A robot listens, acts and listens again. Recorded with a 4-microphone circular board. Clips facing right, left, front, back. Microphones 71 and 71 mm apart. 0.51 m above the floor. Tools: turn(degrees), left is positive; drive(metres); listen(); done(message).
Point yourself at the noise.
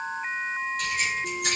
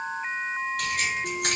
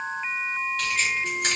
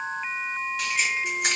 turn(degrees=95)
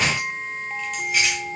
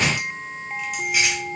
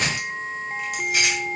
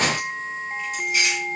done("Facing the keys jangling, 1 to 2 m away.")